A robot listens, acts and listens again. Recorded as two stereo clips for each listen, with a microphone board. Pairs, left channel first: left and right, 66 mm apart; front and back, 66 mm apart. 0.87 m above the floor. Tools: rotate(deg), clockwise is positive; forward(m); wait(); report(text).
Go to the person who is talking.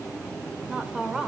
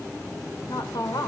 rotate(10)
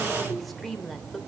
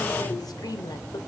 forward(1.0)
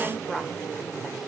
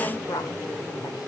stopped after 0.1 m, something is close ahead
report("Something is in my way. I am facing the woman speaking but have not reached it.")